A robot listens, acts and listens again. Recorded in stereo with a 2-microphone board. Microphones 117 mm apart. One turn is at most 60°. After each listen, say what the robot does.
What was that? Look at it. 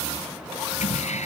Turn 60° left.
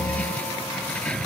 Turn 10° left.
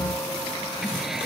Keep listening.
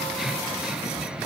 Keep listening.
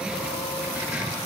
Facing where the keys jangling came from. I can't hear it now.